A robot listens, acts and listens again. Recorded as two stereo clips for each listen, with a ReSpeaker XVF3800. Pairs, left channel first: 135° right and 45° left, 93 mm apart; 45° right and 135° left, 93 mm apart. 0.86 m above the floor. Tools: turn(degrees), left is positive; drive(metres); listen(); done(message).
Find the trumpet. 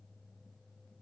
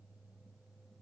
listen()
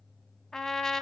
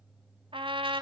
turn(degrees=140)
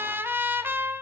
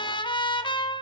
turn(degrees=-20)
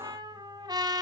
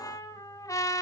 done("Facing the trumpet, 2 to 4 m away.")